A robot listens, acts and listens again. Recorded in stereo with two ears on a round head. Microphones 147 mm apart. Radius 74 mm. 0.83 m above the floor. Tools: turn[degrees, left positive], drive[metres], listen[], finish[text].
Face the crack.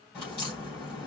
Thought: The crack: about 30° left or 150° left.
Action: turn[30]
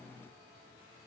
Action: listen[]
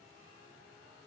Action: finish[I heard a crack, but can't make it out now. It was about straight ahead or 120° left.]